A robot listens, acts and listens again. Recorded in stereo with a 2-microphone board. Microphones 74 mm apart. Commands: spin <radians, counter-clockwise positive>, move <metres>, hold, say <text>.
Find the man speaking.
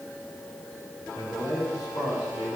spin 0.87
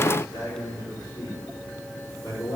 spin 1.48
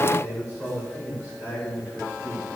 spin 0.52
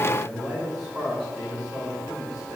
say Found it: a man speaking, straight ahead.